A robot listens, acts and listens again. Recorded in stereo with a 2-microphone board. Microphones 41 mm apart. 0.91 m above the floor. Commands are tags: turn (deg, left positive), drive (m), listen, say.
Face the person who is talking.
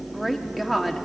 <turn deg="30"/>
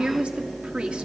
<turn deg="-30"/>
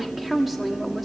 <say>Found it: a woman speaking, straight ahead, 1 to 2 m away.</say>